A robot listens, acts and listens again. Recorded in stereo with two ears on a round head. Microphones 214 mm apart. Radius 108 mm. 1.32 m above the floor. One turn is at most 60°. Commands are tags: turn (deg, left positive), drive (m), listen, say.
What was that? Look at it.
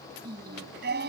<turn deg="-45"/>
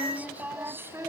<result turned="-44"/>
<turn deg="-10"/>
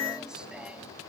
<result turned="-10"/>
<listen/>
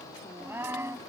<turn deg="-10"/>
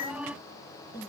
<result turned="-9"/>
<turn deg="-10"/>
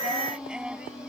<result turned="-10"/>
<say>Found it: singing, straight ahead.</say>